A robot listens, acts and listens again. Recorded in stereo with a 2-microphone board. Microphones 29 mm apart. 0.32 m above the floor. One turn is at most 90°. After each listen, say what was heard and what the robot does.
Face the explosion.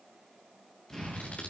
The explosion: about 25° left or 155° left. Turn 25° left.
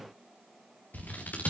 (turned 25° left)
Keep listening.
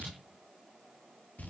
I heard an explosion, but can't make it out now. It was about straight ahead or 130° left.